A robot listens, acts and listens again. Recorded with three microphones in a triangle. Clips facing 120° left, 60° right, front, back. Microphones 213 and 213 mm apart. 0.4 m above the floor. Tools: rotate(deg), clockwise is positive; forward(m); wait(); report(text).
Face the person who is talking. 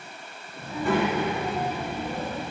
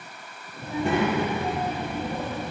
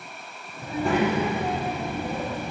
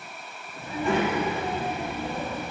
rotate(45)
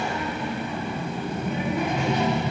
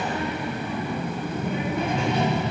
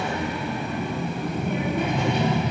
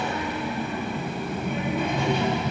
report("Found it: a child speaking, straight ahead, 2 to 4 m away.")